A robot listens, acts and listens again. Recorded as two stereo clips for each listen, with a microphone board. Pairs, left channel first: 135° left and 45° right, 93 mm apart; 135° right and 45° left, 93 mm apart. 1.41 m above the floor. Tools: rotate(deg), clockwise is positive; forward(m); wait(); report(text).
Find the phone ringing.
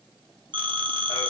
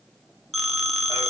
rotate(50)
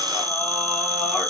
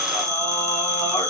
report("Found it: a phone ringing, straight ahead, under 1 m away.")